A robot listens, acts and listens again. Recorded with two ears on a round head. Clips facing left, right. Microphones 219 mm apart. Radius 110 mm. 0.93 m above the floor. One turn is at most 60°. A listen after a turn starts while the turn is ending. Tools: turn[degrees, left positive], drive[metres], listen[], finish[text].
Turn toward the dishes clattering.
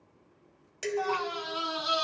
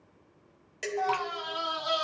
Action: turn[30]
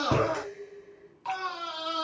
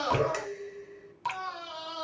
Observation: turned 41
Thought: So it is at 35° right.
Action: turn[-35]
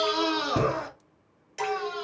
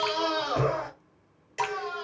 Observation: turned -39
Action: listen[]
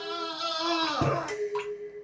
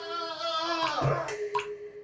Action: finish[Facing the dishes clattering, 1 to 2 m away.]